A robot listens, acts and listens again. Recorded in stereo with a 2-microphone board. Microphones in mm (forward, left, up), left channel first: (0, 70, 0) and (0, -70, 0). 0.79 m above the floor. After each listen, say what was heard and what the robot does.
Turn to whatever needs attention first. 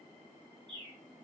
Keep listening.
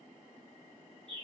Keep listening.
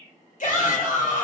The shout: about 65° left or 115° left. Turn 65° left.
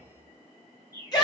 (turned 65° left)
So it is at 30° left. Turn 30° left.
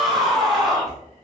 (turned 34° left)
Found it: a shout, straight ahead, 1 to 2 m away.